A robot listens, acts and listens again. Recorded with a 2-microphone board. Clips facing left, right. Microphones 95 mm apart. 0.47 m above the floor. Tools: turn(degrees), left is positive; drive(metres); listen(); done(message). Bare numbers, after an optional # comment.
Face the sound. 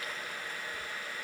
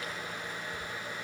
listen()
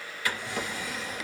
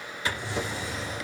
# The drawer: about 25° right or 155° right.
turn(-25)
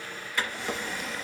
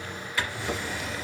done("Found it: a drawer, straight ahead, 2 to 4 m away.")